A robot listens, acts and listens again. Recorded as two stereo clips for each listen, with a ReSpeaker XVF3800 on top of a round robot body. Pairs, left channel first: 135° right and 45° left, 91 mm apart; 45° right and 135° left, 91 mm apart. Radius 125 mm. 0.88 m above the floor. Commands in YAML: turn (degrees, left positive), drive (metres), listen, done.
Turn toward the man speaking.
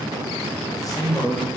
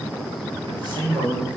turn: 175
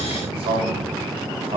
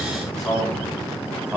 turn: 55
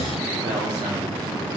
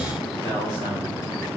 listen: true
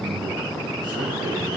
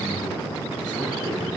listen: true
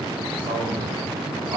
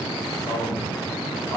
done: "Facing the man speaking, 2 to 4 m away."